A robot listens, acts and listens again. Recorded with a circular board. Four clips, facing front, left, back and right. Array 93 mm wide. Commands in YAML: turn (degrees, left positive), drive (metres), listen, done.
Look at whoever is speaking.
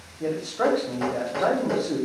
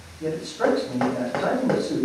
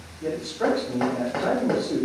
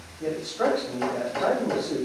turn: -15
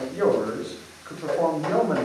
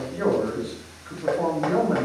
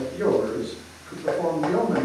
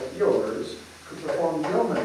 done: "Facing the man speaking, 1 to 2 m away."